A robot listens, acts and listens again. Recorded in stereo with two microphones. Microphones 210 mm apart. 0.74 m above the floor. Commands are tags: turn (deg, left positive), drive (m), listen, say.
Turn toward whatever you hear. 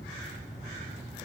<listen/>
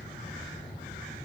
<listen/>
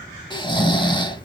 <turn deg="25"/>
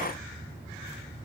<listen/>
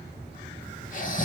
<turn deg="125"/>
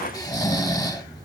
<turn deg="20"/>
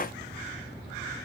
<listen/>
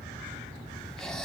<listen/>
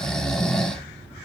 <say>Found it: snoring, straight ahead.</say>